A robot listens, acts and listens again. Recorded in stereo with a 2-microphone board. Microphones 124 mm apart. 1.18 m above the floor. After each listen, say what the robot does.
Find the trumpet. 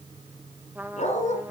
Turn 30° right.
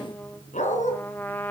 Turn 15° left.
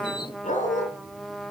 Found it: a trumpet, straight ahead, 1 to 2 m away.